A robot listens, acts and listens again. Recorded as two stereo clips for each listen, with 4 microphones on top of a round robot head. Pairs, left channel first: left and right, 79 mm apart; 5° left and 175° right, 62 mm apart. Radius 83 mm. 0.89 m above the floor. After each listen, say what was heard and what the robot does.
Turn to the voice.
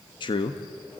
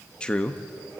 The man speaking: 80° left. Turn 80° left.
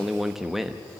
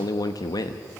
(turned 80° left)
Found it: a man speaking, straight ahead.